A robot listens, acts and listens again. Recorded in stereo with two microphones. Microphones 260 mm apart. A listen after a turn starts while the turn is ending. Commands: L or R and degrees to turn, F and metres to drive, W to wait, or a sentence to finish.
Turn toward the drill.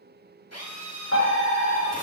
L90
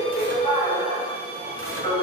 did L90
W
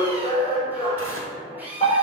Found it: a drill, straight ahead.